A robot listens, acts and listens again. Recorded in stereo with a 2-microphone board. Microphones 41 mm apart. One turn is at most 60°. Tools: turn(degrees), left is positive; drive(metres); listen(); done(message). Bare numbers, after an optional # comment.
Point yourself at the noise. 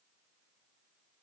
listen()
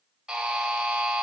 turn(-30)
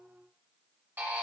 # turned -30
# So it is at 140° right.
turn(-60)
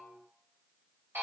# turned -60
# The buzzer is now 65° right.
turn(-60)
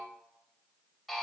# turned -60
done("Found it: a buzzer, straight ahead, 1 to 2 m away.")